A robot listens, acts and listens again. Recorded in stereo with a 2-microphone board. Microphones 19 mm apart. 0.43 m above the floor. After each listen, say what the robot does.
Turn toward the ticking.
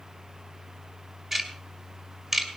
Turn 20° right.
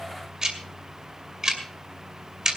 Turn 135° right.
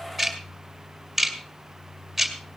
Facing the ticking, 2 to 4 m away.